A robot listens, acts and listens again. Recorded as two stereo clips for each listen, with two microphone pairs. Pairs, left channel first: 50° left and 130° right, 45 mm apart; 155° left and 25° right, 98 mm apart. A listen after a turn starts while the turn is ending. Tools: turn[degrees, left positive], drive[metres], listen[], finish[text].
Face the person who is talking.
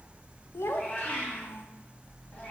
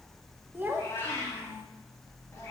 Thought: The child speaking: 45° left.
Action: turn[45]
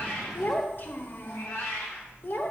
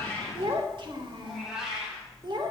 Thought: The child speaking is now 10° left.
Action: turn[10]
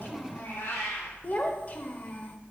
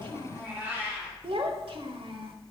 Action: finish[Facing the child speaking, under 1 m away.]